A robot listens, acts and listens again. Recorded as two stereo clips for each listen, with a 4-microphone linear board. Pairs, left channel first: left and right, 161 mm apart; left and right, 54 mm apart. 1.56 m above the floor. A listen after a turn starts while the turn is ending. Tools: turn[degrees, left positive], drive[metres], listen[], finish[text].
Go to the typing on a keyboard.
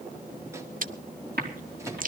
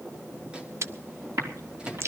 Action: turn[-90]
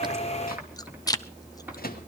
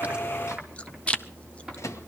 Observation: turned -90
Action: listen[]
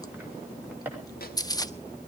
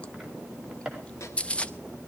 Thought: The typing on a keyboard is now 10° right.
Action: turn[-10]
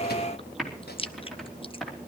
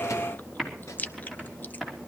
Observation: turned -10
Action: drive[1.0]
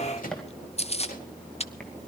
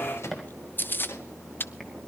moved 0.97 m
Action: drive[1.0]
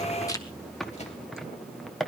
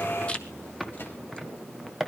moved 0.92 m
Action: drive[1.0]
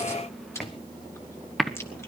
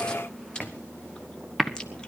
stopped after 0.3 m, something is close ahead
Action: finish[Arrived at the typing on a keyboard, straight ahead.]